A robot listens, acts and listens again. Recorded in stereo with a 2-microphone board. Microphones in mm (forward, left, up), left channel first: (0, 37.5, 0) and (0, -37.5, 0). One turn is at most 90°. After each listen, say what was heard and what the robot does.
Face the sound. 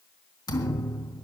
The thud: about 60° left or 120° left. Turn 60° left.
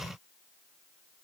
Keep listening.
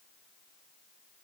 I heard a thud, but can't make it out now. It was about straight ahead or 60° left.